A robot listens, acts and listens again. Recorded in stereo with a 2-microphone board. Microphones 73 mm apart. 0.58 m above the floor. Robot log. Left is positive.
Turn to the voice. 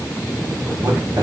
note: The man speaking: about 55° right or 125° right.
cmd yaw -55
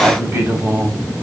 note: So it is at 45° right.
cmd yaw -45
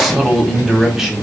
end: Facing the man speaking.